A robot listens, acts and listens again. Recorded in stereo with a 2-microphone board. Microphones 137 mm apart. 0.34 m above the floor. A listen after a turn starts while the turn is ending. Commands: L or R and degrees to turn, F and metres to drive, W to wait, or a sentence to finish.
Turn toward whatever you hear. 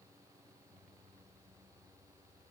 W
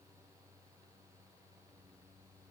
W
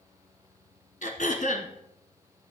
L70
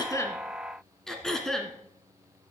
Facing the throat clearing, 1 to 2 m away.